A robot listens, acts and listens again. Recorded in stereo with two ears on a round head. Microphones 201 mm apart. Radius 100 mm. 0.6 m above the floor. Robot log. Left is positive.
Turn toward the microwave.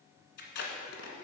cmd idle
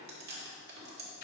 cmd idle
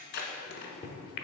note: The microwave: about 45° left or 135° left.
cmd yaw +45
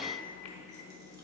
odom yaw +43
note: So it is at 85° left.
cmd yaw +85
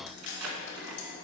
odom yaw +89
cmd idle
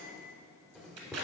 end: Found it: a microwave, straight ahead.